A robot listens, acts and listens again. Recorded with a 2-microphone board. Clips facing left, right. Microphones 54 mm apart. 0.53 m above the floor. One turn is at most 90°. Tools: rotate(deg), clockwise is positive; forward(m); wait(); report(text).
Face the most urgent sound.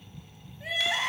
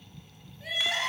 rotate(-25)
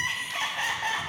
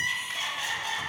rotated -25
rotate(-90)
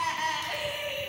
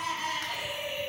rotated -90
rotate(-65)
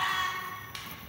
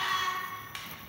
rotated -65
rotate(-10)
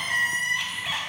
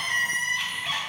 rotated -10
report("Facing the crying, under 1 m away.")